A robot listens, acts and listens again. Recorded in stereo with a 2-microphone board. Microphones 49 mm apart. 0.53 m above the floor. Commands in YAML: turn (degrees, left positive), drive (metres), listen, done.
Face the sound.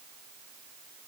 listen: true
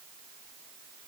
listen: true
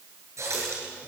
turn: -90
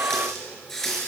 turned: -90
turn: 10
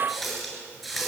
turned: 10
done: "Found it: a running tap, straight ahead, over 4 m away."